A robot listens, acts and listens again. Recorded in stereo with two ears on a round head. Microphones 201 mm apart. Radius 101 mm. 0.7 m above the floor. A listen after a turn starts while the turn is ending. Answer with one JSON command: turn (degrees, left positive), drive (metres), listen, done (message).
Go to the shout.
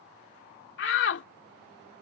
{"turn": 55}
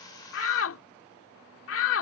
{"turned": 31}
{"turn": 80}
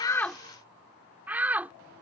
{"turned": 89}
{"turn": -10}
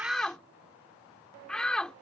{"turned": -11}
{"drive": 1.0}
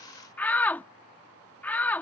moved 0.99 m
{"turn": 10}
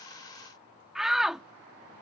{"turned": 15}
{"drive": 1.0}
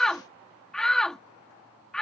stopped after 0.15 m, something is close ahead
{"done": "Arrived at the shout, straight ahead."}